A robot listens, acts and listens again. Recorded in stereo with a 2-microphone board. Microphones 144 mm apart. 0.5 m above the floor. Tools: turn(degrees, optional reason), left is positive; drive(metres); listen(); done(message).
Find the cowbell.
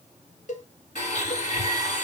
turn(degrees=60, reason="The cowbell: about 60° left or 120° left.")
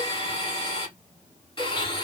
listen()
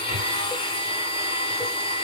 listen()
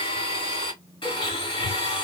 done("I heard a cowbell, but can't make it out now. It was about straight ahead or 60° left.")